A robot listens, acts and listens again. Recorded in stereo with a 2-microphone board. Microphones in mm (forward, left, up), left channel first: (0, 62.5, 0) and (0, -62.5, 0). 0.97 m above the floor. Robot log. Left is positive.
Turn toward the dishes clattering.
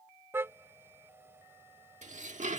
cmd yaw -90
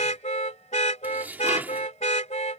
note: So it is at 15° right.
cmd yaw -15
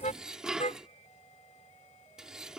end: Facing the dishes clattering.